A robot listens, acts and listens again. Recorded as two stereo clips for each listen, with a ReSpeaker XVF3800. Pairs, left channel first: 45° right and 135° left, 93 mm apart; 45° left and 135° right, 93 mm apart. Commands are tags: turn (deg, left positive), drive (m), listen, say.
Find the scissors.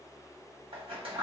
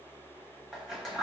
<turn deg="135"/>
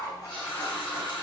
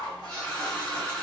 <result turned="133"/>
<say>Found it: scissors, straight ahead, 1 to 2 m away.</say>